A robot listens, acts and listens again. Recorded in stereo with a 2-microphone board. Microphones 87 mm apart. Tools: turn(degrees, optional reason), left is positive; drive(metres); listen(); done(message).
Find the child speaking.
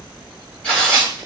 listen()
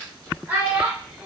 turn(degrees=-15, reason="The child speaking: about 15° right or 165° right.")
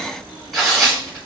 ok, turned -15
listen()
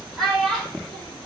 turn(degrees=30)
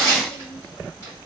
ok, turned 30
listen()
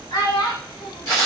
turn(degrees=120, reason="So it is at 120° left.")
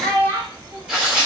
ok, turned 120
turn(degrees=-35, reason="The child speaking is now 35° right.")
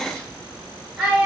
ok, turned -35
done("Facing the child speaking, 2 to 4 m away.")